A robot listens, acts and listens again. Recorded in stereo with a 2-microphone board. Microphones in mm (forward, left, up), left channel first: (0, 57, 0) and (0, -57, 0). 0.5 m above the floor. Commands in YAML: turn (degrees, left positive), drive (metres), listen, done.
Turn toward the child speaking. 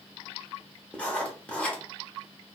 listen: true
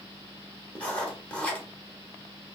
listen: true
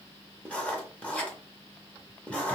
done: "I can't make out a child speaking, only writing."